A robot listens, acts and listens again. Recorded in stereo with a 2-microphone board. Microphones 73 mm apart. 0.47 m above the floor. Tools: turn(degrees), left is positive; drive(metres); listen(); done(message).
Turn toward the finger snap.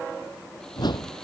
listen()
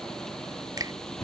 turn(degrees=-60)
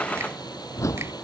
listen()
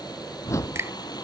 turn(degrees=-45)
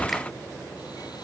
listen()
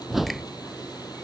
listen()
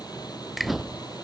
done("Facing the finger snap.")